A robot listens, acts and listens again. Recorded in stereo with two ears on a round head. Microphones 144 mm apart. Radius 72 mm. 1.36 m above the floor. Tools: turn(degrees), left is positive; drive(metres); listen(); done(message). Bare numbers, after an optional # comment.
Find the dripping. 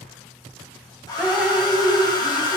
turn(-30)
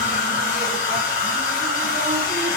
listen()
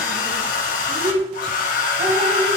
# So it is at 145° right.
turn(-145)
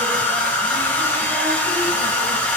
listen()
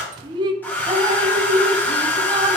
# The dripping is now 30° right.
turn(-30)
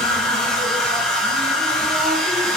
listen()
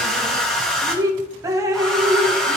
# The dripping is now 20° right.
turn(-20)
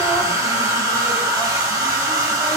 listen()
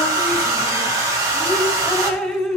done("Found it: dripping, straight ahead, under 1 m away.")